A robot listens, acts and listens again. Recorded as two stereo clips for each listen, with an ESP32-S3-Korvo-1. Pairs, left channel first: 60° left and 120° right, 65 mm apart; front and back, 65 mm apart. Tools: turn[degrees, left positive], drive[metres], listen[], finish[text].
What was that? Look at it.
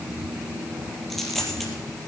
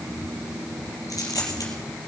Thought: The dropped coin: 25° right.
Action: turn[-25]
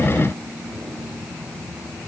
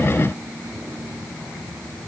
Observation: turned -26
Action: finish[Facing where the dropped coin came from. I can't hear it now.]